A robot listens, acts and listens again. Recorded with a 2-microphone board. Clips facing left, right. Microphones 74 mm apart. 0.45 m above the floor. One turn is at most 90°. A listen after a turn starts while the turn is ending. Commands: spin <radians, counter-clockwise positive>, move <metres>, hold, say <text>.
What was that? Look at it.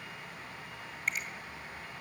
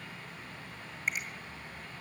spin -0.52
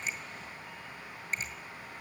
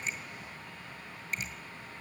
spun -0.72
spin 0.61
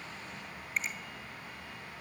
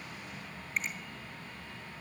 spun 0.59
say Found it: a finger snap, straight ahead.